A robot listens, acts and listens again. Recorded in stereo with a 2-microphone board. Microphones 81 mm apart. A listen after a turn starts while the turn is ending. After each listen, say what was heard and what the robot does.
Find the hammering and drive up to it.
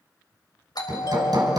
The hammering: about 60° right or 120° right. Turn 60° right.
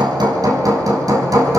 So it is at 55° right. Turn 55° right.
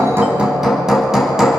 Drive 1.0 m forward.
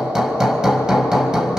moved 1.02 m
The hammering is now 10° right. Turn 10° right.
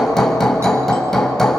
Drive 1.0 m forward.
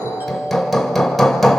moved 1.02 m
Drive 1.0 m forward.
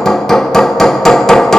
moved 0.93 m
Drive 1.0 m forward.
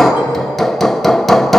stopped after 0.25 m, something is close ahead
I am next to the hammering.